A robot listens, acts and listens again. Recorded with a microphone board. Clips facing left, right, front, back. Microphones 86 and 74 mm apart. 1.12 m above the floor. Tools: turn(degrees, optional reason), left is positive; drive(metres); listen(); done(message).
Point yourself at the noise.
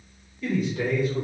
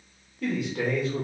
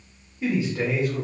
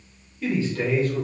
turn(degrees=-80, reason="The man speaking: 80° right.")
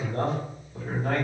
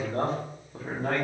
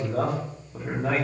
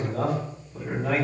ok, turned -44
turn(degrees=-50, reason="The man speaking is now 50° right.")
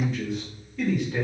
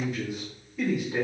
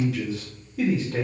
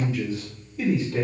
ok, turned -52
turn(degrees=-10, reason="The man speaking is now 10° right.")
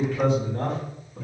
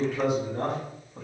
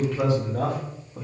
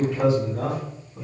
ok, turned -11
turn(degrees=-10, reason="The man speaking is now 10° right.")
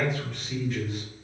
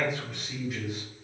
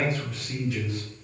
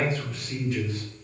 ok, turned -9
turn(degrees=-10, reason="The man speaking is now 10° right.")
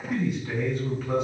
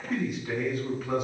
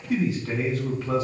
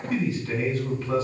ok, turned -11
done("Found it: a man speaking, straight ahead.")